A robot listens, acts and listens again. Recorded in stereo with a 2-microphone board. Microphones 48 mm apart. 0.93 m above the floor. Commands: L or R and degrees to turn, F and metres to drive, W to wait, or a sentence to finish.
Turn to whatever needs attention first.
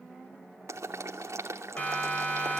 L30
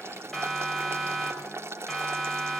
Facing the siren.